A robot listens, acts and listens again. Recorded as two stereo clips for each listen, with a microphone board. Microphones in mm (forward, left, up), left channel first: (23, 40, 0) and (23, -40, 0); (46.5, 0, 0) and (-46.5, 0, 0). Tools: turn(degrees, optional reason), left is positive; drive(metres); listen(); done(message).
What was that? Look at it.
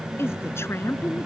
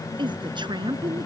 turn(degrees=150, reason="The woman speaking: 150° left.")
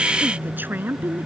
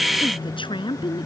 turn(degrees=-25, reason="The woman speaking is now 25° right.")
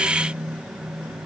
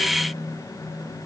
listen()
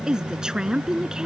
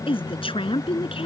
turn(degrees=-10, reason="The woman speaking is now 10° right.")
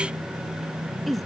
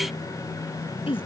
done("Found it: a woman speaking, straight ahead.")